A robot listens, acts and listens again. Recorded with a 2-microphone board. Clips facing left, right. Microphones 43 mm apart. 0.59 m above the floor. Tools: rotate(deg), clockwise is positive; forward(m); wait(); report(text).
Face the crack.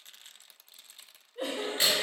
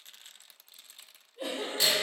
rotate(-30)
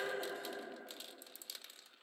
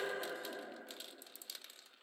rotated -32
wait()
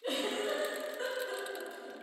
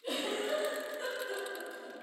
report("I heard a crack, but can't make it out now. It was about straight ahead or 120° left.")